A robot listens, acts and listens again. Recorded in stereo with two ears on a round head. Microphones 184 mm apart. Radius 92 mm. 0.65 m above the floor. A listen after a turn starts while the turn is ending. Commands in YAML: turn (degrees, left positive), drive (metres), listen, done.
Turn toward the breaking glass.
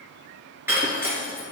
turn: -30
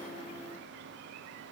listen: true
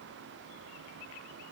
done: "I heard breaking glass, but can't make it out now. It was about 20° left or 140° right."